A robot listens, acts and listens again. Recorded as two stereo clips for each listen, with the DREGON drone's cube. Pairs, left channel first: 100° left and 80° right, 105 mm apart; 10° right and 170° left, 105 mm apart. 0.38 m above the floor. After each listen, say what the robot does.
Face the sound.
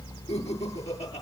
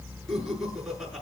Turn 85° left.
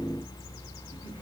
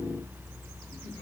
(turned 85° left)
Keep listening.
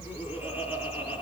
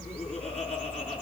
Keep listening.
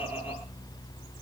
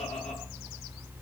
I heard laughter from this way, but can't make it out now.